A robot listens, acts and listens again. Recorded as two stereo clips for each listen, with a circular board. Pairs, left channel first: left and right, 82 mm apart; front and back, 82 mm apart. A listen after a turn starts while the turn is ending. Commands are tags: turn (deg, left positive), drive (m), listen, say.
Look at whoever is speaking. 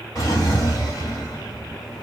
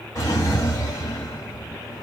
<listen/>
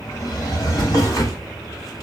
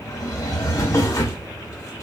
<listen/>
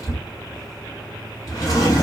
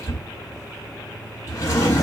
<say>I can't make out anyone speaking to turn to.</say>